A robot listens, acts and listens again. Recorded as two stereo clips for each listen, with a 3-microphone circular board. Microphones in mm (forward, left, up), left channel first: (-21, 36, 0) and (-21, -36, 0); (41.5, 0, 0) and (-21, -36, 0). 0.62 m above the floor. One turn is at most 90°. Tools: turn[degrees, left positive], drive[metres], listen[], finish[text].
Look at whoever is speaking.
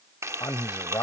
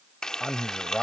Thought: The man speaking: 120° left.
Action: turn[90]
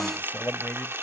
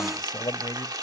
Thought: The man speaking is now 25° left.
Action: turn[25]
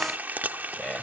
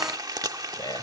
Thought: The man speaking is now 15° left.
Action: turn[15]
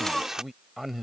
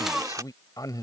Action: finish[Facing the man speaking.]